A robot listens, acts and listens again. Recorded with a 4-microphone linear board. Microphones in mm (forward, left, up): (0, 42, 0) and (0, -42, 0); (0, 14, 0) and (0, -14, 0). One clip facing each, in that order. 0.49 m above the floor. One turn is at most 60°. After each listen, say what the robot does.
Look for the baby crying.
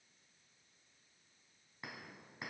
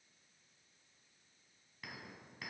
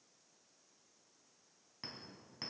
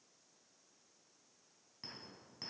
Keep listening.
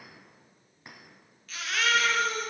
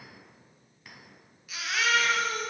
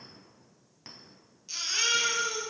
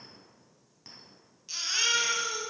Turn 30° right.
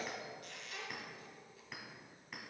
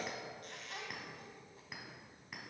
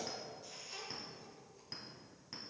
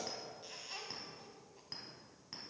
Keep listening.
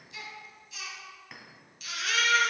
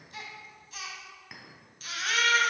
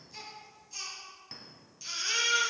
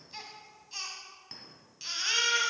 Turn 60° right.
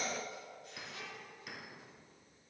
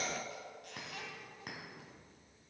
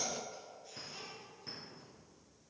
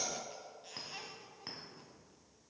Turn 60° right.
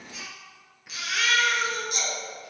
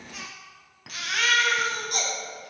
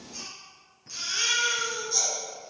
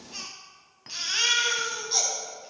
Turn 50° right.
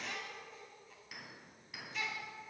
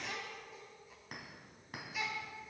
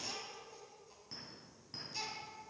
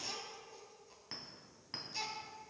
Facing the baby crying, 2 to 4 m away.